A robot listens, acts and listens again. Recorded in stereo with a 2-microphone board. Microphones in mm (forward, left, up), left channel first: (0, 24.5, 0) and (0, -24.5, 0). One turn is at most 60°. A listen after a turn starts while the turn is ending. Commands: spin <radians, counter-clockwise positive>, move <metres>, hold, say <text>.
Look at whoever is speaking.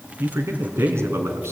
spin -1.05
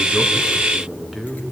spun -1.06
say Facing the man speaking.